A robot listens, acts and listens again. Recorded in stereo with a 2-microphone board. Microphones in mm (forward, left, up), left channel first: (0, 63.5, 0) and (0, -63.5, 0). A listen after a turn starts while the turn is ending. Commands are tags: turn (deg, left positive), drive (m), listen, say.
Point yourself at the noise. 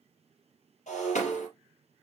<turn deg="70"/>
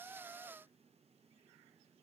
<listen/>
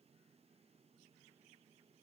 <say>I heard breaking glass, but can't make it out now. It was about straight ahead or 40° left.</say>